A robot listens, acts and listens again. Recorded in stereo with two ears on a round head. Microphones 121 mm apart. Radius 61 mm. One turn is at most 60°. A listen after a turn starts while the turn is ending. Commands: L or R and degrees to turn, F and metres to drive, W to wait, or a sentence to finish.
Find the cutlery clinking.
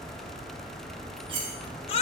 R40
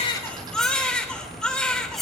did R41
Facing the cutlery clinking.